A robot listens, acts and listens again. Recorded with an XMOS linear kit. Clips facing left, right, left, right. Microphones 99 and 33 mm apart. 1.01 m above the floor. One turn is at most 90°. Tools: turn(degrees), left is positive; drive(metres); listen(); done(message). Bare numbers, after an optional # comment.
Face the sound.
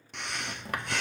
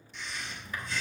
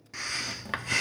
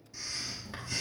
turn(90)
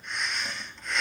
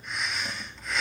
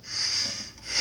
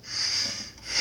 done("Facing the breathing.")